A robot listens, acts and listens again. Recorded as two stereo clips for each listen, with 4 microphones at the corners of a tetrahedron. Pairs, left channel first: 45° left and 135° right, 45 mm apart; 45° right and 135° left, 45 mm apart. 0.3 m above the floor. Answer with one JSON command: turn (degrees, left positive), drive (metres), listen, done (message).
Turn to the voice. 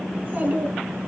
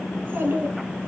{"turn": 175}
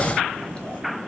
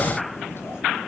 {"turn": -20}
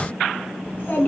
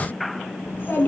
{"done": "Facing the child speaking."}